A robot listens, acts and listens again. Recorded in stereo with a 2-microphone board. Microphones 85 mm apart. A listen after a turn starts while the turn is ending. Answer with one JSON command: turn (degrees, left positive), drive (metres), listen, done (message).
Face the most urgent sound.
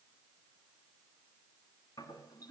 {"listen": true}
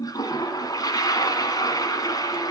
{"listen": true}
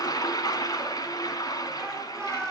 {"turn": 30}
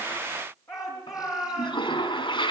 {"turn": 140}
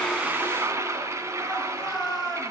{"done": "Found it: a shout, straight ahead."}